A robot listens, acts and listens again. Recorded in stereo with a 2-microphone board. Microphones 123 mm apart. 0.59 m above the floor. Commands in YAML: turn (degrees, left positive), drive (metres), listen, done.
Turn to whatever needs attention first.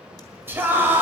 turn: -20
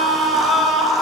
done: "Found it: a scream, straight ahead, 2 to 4 m away."